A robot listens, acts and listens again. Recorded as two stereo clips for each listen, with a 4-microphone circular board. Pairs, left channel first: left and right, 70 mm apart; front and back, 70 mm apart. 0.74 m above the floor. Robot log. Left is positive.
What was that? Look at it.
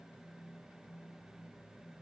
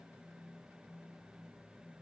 cmd idle
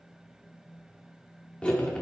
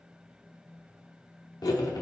note: The cutlery clinking: 15° left.
cmd yaw +15
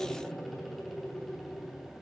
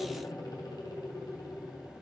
end: Facing the cutlery clinking, 1 to 2 m away.